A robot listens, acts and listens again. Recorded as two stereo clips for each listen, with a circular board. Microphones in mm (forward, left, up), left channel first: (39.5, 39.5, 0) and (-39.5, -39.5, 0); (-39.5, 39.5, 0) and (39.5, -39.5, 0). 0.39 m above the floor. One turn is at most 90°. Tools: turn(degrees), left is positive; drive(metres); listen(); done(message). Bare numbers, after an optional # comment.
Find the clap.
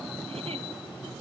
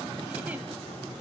listen()
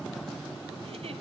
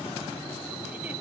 listen()
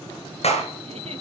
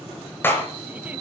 # The clap: 65° left.
turn(65)
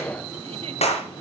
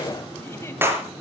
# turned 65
# The clap is now 25° left.
turn(25)
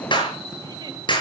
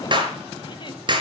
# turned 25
done("Found it: a clap, straight ahead.")